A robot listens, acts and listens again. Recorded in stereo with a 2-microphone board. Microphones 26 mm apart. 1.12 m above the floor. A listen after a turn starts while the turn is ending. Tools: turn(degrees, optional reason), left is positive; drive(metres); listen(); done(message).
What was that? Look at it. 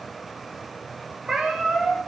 turn(degrees=-30, reason="The cat meowing: about 30° right or 150° right.")
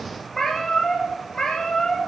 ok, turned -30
turn(degrees=30, reason="So it is at 30° left.")
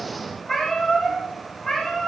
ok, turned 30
turn(degrees=20, reason="The cat meowing is now 20° left.")
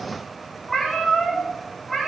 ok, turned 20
done("Found it: a cat meowing, straight ahead, 2 to 4 m away.")